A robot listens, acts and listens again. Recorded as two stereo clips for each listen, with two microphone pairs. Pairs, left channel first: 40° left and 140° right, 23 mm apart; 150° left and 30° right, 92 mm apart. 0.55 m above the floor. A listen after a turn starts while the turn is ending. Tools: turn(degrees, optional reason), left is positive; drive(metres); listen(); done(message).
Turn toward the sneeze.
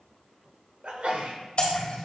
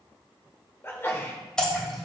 turn(degrees=-150, reason="The sneeze: 150° right.")
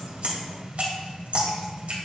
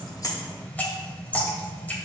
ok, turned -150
done("I heard a sneeze from this way, but can't make it out now.")